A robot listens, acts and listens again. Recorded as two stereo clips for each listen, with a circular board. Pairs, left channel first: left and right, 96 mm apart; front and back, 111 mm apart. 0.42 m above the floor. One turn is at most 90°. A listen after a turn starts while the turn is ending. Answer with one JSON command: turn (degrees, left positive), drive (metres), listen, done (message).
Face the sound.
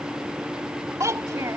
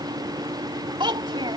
{"turn": -90}
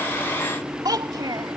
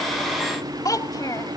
{"turn": -50}
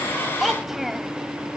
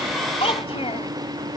{"done": "Found it: a child speaking, straight ahead."}